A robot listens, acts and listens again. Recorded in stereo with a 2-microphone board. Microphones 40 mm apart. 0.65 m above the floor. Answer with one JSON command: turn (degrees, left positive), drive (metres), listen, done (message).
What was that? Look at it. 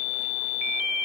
{"listen": true}
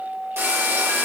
{"turn": -90}
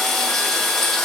{"turn": 10}
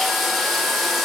{"done": "Found it: frying, straight ahead, 1 to 2 m away."}